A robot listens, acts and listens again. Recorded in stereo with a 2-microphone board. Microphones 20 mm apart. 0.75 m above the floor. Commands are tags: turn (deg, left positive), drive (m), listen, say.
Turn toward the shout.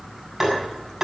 <listen/>
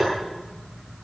<listen/>
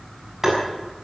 <say>I can't make out a shout, only tapping.</say>